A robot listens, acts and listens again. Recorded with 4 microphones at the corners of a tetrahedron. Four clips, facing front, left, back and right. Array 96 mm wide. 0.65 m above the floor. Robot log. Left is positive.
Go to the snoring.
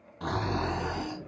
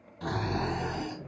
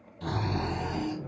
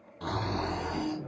note: The snoring: 20° right.
cmd yaw -20
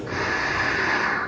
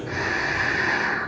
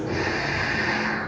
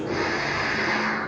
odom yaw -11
note: The snoring is now 10° right.
cmd yaw -10
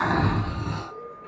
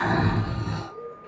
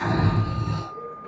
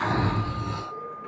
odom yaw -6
cmd fwd 1.0
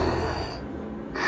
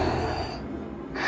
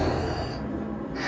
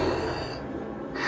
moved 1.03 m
cmd fwd 1.0
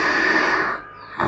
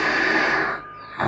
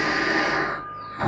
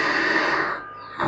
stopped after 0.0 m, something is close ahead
end: I am next to the snoring.